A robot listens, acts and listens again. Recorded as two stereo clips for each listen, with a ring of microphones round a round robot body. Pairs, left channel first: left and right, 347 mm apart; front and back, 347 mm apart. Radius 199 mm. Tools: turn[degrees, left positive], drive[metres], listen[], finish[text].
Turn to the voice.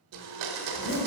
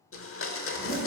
Action: listen[]
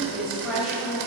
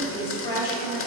Action: finish[Found it: a woman speaking, straight ahead.]